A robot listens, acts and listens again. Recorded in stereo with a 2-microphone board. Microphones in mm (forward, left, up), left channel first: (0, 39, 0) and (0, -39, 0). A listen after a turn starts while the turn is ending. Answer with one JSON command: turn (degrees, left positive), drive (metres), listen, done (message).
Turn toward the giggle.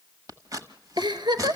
{"turn": -90}
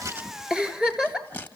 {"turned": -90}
{"turn": -10}
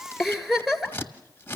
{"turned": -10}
{"done": "Found it: a giggle, straight ahead."}